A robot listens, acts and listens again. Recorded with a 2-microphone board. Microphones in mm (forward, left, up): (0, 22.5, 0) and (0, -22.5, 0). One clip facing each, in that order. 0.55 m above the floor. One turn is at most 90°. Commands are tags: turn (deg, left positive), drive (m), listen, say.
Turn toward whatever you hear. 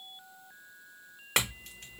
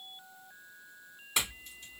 <turn deg="70"/>
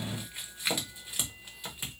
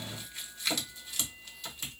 <turn deg="20"/>
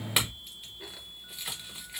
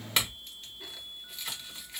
<turn deg="10"/>
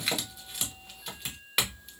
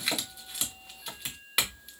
<say>Found it: a clink, straight ahead, under 1 m away.</say>